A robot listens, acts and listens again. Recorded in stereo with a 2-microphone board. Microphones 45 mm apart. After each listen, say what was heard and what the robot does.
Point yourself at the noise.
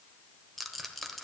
Turn 30° left.
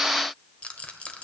So it is at 150° left. Turn 150° left.
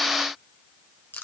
The rattle is now 55° left. Turn 55° left.
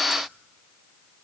Keep listening.
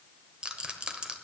The rattle is now 25° right. Turn 25° right.
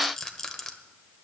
The rattle is now 10° left. Turn 10° left.
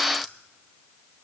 Keep listening.
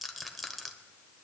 Facing the rattle, 1 to 2 m away.